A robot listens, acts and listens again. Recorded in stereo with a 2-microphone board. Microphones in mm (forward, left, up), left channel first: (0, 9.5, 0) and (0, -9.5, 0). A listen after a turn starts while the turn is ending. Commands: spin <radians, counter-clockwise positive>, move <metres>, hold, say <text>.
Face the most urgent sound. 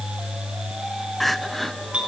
spin 0.52
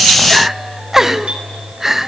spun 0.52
spin -0.35
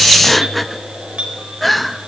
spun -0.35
say Found it: crying, straight ahead.